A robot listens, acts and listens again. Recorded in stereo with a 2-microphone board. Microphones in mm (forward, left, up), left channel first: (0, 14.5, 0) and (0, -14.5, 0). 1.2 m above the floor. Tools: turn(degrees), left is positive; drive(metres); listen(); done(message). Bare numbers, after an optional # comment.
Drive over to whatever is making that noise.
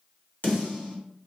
# The snare drum: about 65° left or 115° left.
turn(65)
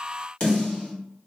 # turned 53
# So it is at 45° left.
turn(45)
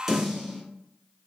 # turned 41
drive(1.0)
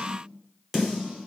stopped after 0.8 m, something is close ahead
done("I am next to the snare drum.")